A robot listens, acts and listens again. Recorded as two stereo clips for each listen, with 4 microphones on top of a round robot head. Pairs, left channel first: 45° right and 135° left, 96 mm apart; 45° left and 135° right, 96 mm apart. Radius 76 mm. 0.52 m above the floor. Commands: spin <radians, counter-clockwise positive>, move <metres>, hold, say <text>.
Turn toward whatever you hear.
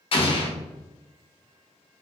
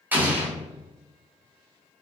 spin -1.13
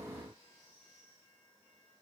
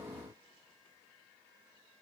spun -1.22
say Facing where the explosion came from. I can't hear it now.